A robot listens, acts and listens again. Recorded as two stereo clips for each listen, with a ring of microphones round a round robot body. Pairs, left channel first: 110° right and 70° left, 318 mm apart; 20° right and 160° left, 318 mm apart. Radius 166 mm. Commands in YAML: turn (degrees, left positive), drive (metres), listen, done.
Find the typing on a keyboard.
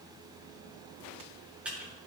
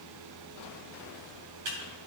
turn: 155
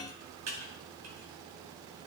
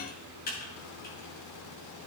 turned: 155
turn: 35
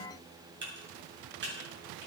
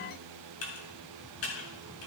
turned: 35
turn: 15
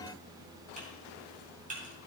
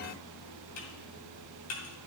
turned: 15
done: "Facing the typing on a keyboard."